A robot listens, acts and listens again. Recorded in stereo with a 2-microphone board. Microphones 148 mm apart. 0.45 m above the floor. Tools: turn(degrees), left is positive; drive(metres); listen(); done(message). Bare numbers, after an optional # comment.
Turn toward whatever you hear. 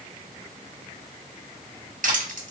# The crushing: about 65° right or 115° right.
turn(-65)
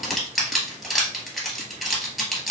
done("Found it: crushing, straight ahead, 1 to 2 m away.")